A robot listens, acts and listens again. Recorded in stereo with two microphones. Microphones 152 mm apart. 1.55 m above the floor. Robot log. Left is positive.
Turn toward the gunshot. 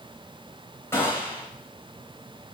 note: The gunshot: about 15° left or 165° left.
cmd yaw +15
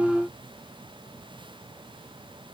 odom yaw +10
cmd idle
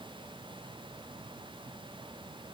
end: I heard a gunshot, but can't make it out now. It was about 5° left or 155° left.